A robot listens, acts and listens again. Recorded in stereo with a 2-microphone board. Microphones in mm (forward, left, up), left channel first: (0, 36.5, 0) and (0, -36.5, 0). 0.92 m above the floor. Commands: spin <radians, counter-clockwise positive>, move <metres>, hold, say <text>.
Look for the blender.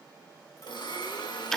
spin 1.22
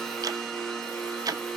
say Found it: a blender, straight ahead, over 4 m away.